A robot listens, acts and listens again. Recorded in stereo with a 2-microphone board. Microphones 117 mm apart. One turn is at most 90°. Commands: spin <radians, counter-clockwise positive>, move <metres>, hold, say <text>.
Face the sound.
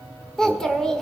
spin 0.52
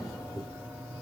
spin 1.57
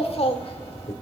spin 1.22
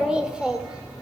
spin -0.17
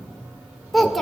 say Found it: a child speaking, straight ahead, 1 to 2 m away.